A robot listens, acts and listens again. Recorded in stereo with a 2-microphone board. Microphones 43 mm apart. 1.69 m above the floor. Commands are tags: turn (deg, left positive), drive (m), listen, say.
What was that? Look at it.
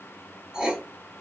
<turn deg="-30"/>
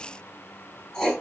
<turn deg="15"/>
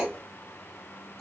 <say>Facing the writing, 1 to 2 m away.</say>